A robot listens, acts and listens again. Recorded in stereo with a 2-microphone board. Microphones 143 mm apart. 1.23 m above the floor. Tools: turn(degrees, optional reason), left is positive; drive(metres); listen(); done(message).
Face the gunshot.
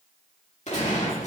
turn(degrees=55, reason="The gunshot: about 55° left or 125° left.")
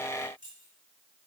listen()
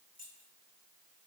done("I heard a gunshot, but can't make it out now. It was about straight ahead or 70° left.")